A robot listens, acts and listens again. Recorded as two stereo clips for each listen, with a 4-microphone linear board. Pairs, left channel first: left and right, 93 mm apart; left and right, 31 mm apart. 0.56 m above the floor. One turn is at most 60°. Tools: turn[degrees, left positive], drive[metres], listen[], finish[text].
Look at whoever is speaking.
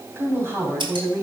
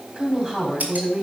Thought: The woman speaking: about 30° right or 150° right.
Action: turn[-30]
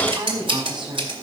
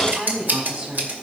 Thought: So it is at 120° right.
Action: turn[-60]
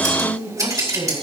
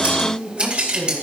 Thought: The woman speaking is now 75° right.
Action: turn[-60]
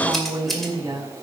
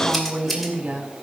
Thought: The woman speaking is now 35° right.
Action: turn[-35]
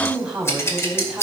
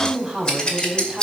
Action: finish[Facing the woman speaking.]